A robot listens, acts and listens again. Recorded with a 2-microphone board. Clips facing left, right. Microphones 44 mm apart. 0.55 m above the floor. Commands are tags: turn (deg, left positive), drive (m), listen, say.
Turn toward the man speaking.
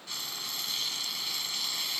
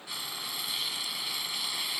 <listen/>
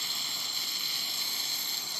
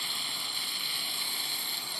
<listen/>
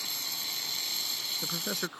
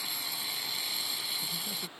<turn deg="65"/>
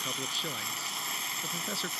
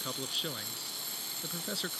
<say>Facing the man speaking.</say>